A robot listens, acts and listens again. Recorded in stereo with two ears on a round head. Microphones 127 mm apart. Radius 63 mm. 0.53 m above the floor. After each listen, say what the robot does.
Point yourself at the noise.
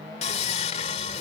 Turn 50° left.
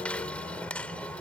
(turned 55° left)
Turn 10° left.
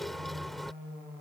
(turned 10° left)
Facing the sawing.